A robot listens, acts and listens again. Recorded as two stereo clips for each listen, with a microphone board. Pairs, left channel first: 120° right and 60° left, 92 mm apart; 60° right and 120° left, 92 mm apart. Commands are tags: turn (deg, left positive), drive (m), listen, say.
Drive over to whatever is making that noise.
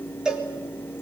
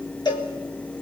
<turn deg="-20"/>
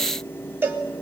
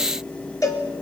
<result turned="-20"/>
<drive m="1.0"/>
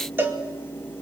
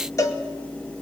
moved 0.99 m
<drive m="1.0"/>
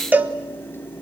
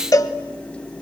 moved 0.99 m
<turn deg="-10"/>
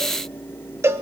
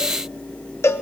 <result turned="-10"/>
<drive m="1.0"/>
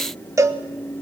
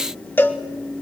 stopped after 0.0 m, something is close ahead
<say>I am next to the cowbell.</say>